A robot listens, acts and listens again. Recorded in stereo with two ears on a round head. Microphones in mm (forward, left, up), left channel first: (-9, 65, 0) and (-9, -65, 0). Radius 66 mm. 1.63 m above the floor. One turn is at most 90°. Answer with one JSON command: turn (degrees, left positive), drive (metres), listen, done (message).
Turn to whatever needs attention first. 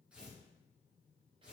{"listen": true}
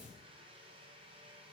{"listen": true}
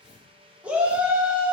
{"turn": -30}
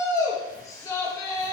{"turn": 25}
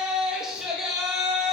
{"done": "Found it: a shout, straight ahead, 1 to 2 m away."}